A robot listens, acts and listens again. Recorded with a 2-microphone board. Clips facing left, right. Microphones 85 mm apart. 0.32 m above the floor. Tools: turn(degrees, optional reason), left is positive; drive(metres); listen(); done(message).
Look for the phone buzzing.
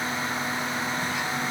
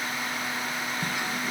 listen()
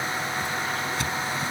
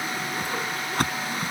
listen()
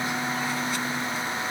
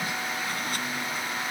done("I can't make out a phone buzzing, only a whoosh.")